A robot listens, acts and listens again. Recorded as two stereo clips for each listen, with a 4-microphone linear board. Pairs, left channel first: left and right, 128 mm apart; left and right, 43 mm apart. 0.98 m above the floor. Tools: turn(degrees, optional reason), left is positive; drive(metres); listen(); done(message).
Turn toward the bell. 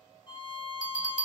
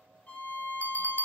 turn(degrees=90)
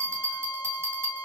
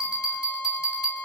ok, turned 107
turn(degrees=-20, reason="So it is at 20° right.")
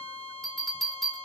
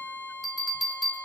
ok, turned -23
done("Found it: a bell, straight ahead, 2 to 4 m away.")